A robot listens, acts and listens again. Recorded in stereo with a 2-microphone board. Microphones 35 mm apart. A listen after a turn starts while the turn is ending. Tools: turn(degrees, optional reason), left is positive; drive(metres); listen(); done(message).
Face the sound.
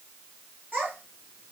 turn(degrees=-60, reason="The child speaking: about 60° right or 120° right.")
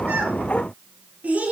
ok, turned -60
turn(degrees=-45, reason="So it is at 45° right.")
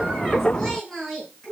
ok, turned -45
turn(degrees=15, reason="The child speaking is now 15° left.")
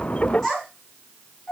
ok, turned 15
turn(degrees=10, reason="The child speaking is now 10° left.")
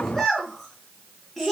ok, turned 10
done("Facing the child speaking, over 4 m away.")